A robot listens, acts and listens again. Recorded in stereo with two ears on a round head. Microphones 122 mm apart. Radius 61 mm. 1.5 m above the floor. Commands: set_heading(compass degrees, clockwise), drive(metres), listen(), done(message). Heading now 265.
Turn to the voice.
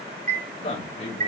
set_heading(215)
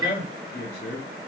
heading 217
set_heading(137)
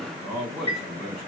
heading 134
done("Found it: a man speaking, straight ahead, 2 to 4 m away.")